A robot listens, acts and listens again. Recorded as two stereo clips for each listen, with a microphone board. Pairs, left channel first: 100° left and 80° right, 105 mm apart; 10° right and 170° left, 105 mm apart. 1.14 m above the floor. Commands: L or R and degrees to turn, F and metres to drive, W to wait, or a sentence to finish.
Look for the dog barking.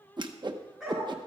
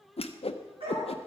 R165
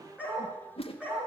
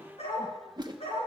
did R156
Facing the dog barking, over 4 m away.